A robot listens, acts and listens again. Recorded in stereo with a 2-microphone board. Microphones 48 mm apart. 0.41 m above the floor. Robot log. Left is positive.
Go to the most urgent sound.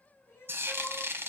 note: The crying: about 60° left or 120° left.
cmd yaw +60
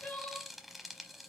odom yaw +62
note: So it is at 50° left.
cmd yaw +50
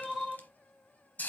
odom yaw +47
cmd fwd 1.0
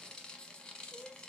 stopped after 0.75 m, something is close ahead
end: I am next to the crying.